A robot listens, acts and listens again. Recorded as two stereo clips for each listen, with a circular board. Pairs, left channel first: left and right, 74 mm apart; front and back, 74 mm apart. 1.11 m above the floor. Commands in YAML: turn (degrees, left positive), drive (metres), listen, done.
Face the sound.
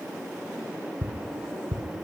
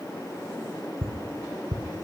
turn: -145
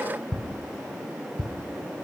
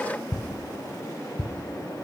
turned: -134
turn: -10
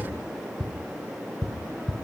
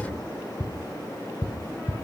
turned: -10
done: "Facing the ticking."